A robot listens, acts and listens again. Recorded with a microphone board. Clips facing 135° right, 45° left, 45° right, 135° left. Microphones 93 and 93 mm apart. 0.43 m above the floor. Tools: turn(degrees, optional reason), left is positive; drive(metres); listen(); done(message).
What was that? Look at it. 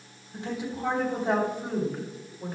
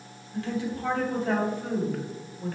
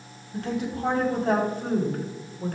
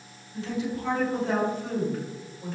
turn(degrees=-65, reason="The woman speaking: 65° right.")
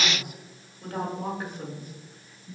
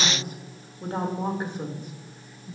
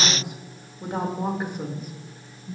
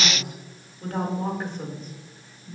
turn(degrees=65, reason="The woman speaking is now 65° left.")
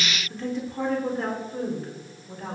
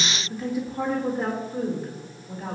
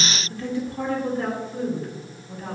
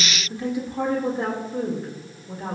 turn(degrees=120, reason="The woman speaking is now 120° left.")
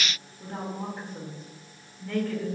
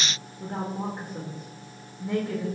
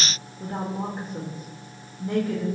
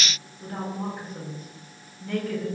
turn(degrees=-10, reason="The woman speaking is now 10° right.")
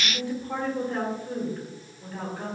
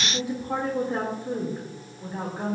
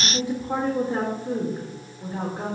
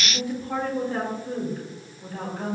done("Facing the woman speaking, 1 to 2 m away.")